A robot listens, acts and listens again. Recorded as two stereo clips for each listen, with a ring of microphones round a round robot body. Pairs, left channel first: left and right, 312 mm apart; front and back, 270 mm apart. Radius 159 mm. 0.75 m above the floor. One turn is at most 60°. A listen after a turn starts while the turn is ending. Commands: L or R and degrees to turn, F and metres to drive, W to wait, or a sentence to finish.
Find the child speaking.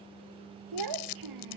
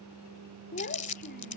R60
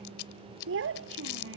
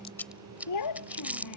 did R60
R40
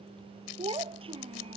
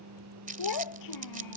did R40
R15
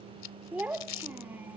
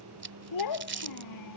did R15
Found it: a child speaking, straight ahead.